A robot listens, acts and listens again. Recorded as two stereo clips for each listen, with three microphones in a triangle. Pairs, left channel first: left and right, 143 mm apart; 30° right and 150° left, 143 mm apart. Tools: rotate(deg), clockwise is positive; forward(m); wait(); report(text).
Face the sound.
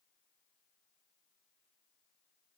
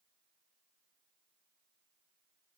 wait()
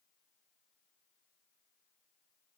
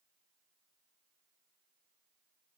wait()
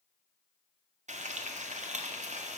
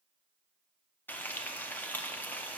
rotate(105)
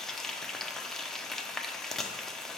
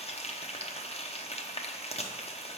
report("Facing the frying.")